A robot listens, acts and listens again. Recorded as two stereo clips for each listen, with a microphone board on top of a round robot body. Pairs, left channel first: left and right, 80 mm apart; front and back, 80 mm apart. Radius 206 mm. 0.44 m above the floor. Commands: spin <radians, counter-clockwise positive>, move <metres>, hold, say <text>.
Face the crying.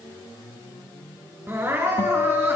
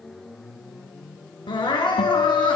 spin -0.44
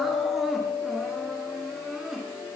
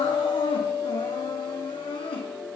say Facing the crying, 2 to 4 m away.